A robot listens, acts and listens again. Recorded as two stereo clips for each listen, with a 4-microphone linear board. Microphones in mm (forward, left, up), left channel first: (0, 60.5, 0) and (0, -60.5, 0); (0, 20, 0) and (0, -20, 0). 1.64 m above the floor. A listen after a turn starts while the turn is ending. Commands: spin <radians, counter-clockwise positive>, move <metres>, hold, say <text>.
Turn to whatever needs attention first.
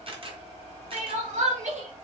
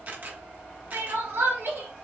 spin -1.57
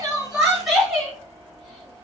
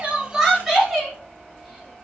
say Facing the crying, 2 to 4 m away.